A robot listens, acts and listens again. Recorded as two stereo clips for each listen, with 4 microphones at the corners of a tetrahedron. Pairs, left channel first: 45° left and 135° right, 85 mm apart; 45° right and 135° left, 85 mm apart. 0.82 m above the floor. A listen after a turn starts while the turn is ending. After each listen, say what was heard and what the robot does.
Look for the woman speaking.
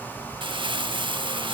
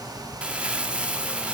Keep listening.
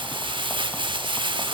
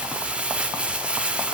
Keep listening.
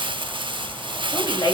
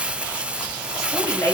The woman speaking: 10° left. Turn 10° left.
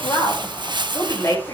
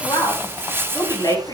Facing the woman speaking, over 4 m away.